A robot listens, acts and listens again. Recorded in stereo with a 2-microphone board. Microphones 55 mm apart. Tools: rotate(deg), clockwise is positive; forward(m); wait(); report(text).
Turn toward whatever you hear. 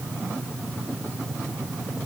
wait()
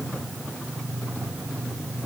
wait()
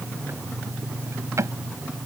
rotate(65)
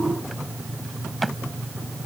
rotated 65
report("Found it: a drawer, straight ahead.")